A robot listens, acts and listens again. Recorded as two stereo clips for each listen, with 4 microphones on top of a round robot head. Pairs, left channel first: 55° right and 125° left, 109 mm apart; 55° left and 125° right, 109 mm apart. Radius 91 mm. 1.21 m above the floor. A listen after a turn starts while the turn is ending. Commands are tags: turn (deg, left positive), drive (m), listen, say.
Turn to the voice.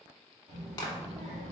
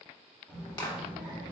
<turn deg="155"/>
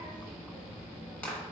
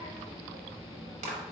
<turn deg="20"/>
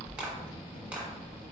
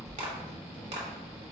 <say>Found it: a child speaking, straight ahead.</say>